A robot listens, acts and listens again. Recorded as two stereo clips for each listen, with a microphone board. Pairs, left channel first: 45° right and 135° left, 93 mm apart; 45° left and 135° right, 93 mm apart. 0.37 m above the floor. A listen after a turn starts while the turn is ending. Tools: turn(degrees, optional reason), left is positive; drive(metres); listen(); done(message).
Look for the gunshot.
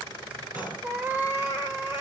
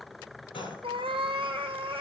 turn(degrees=65, reason="The gunshot: 65° left.")
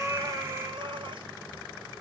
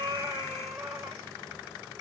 done("Facing where the gunshot came from. I can't hear it now.")